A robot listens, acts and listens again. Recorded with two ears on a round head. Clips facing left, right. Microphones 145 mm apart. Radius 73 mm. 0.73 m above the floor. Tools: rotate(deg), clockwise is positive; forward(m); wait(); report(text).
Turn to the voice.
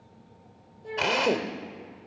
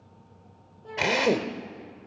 rotate(-20)
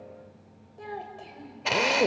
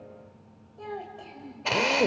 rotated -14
rotate(-10)
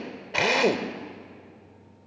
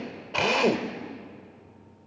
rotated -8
wait()
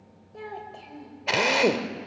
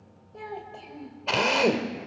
report("Found it: a child speaking, straight ahead.")